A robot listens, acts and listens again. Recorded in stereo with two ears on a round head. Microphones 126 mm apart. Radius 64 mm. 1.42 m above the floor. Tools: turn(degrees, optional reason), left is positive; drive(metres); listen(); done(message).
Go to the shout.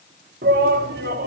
turn(degrees=-90)
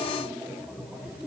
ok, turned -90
drive(metres=1.0)
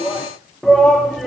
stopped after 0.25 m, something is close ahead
done("Blocked. The shout is further on, straight ahead.")